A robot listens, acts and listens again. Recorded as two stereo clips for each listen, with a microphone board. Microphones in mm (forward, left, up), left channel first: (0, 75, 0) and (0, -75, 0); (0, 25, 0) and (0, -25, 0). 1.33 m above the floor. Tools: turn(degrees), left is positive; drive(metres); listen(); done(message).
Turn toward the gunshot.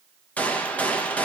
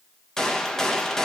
turn(degrees=30)
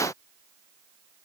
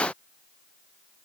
listen()
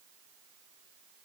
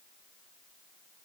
done("I heard a gunshot, but can't make it out now. It was about 20° right or 140° left.")